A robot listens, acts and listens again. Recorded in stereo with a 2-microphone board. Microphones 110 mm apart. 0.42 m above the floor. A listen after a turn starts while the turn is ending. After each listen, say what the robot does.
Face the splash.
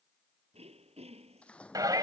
Turn 30° left.
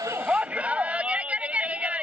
Keep listening.
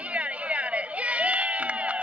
I heard a splash, but can't make it out now. It was about 20° right or 140° left.